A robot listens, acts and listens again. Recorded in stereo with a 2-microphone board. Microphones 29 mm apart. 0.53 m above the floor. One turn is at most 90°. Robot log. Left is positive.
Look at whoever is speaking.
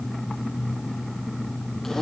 cmd idle
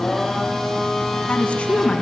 note: The woman speaking: about 40° left or 140° left.
cmd yaw +40
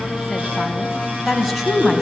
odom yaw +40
note: So it is at 10° right.
cmd yaw -10
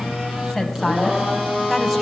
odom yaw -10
end: Facing the woman speaking.